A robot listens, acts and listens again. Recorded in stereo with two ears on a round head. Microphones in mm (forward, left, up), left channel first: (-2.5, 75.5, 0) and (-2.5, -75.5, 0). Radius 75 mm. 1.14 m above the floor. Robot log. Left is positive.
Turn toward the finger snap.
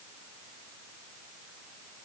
cmd idle
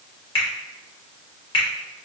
note: The finger snap: about 35° left or 145° left.
cmd yaw +35
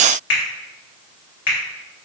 note: So it is at 110° left.
cmd yaw +110
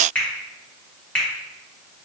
end: Facing the finger snap, 1 to 2 m away.